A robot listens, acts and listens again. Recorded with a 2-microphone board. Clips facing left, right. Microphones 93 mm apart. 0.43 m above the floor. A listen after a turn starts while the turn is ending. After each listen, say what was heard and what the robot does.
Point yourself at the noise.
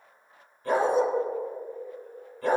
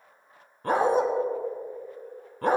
The dog barking: about 55° right or 125° right. Turn 55° right.
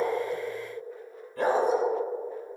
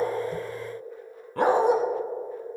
So it is at 75° right. Turn 75° right.
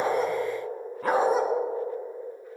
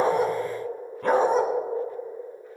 Found it: a dog barking, straight ahead, 1 to 2 m away.